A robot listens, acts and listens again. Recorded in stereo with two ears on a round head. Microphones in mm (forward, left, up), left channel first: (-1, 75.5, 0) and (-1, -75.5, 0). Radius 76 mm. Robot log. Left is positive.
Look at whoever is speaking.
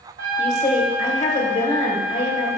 note: The woman speaking: about 40° left or 140° left.
cmd yaw +40
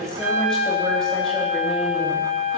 cmd idle
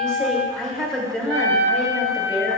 end: Found it: a woman speaking, straight ahead.